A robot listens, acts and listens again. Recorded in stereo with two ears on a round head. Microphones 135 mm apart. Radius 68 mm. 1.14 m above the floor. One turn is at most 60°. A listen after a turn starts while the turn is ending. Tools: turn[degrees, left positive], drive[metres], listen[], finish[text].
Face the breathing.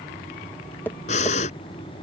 Thought: The breathing: about 50° left or 130° left.
Action: turn[50]
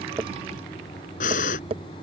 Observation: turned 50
Thought: So it is at 70° left.
Action: turn[60]
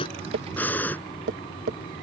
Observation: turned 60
Thought: The breathing is now 15° left.
Action: turn[15]
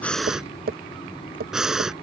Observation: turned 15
Action: finish[Found it: breathing, straight ahead.]